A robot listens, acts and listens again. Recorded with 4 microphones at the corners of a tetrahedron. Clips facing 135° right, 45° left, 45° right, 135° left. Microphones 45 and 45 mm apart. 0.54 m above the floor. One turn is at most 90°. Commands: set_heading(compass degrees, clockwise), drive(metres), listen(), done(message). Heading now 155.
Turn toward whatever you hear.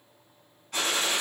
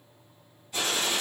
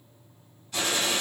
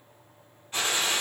set_heading(245)
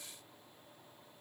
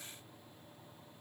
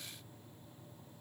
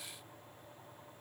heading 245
set_heading(320)
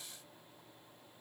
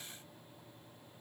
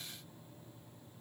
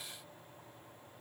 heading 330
set_heading(320)
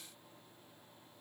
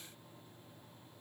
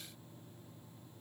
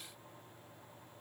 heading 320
done("I heard a gunshot from this way, but can't make it out now.")